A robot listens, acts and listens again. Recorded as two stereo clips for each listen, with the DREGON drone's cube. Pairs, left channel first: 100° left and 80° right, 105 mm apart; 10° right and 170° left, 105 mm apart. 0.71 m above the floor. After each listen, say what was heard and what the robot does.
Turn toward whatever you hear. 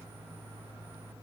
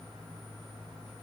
Keep listening.
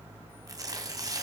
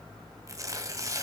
The tearing paper: 130° right. Turn 130° right.
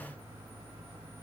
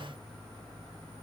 Keep listening.
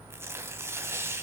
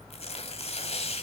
The tearing paper is now 10° right. Turn 10° right.
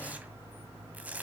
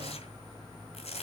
Facing the tearing paper.